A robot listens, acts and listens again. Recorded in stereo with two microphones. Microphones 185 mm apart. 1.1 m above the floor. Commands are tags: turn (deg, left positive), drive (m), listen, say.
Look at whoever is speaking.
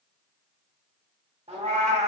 <listen/>
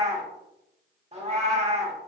<listen/>
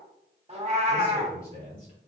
<turn deg="-65"/>
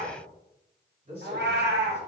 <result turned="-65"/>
<turn deg="-45"/>
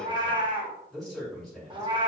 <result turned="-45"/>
<say>Facing the man speaking, over 4 m away.</say>